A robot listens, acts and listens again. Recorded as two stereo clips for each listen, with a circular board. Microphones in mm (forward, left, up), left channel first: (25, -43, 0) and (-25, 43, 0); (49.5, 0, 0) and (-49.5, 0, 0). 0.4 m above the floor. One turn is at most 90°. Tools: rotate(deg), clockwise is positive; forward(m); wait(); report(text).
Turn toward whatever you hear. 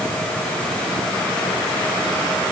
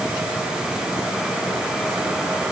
wait()
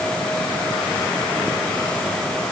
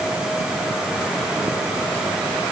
wait()
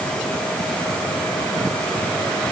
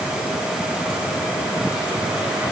report("I can't make out anything.")